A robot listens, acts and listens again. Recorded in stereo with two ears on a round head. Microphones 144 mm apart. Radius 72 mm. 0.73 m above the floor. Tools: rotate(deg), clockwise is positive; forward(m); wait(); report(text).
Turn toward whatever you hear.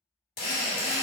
rotate(-65)
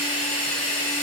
rotate(-40)
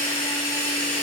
report("Found it: a drill, straight ahead, 1 to 2 m away.")